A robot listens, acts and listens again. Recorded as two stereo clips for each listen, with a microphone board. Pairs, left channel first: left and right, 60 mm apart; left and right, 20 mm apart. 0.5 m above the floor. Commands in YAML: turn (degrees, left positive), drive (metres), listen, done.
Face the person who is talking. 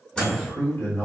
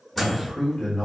turn: 45
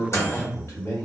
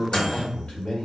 turn: 80
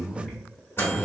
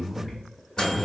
done: "Found it: a man speaking, straight ahead, 1 to 2 m away."